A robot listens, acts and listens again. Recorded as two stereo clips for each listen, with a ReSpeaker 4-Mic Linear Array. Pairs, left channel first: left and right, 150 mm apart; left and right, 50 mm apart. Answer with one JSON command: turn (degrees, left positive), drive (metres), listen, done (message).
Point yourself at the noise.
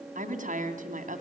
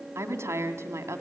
{"turn": -60}
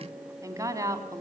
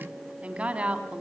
{"turn": -25}
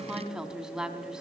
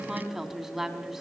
{"done": "Found it: a woman speaking, straight ahead, 2 to 4 m away."}